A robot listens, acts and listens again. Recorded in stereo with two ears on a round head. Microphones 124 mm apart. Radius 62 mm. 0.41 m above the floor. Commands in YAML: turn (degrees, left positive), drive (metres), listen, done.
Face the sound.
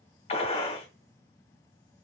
turn: 40
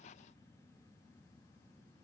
listen: true
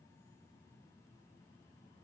done: "I heard a gunshot, but can't make it out now. It was about straight ahead or 100° left."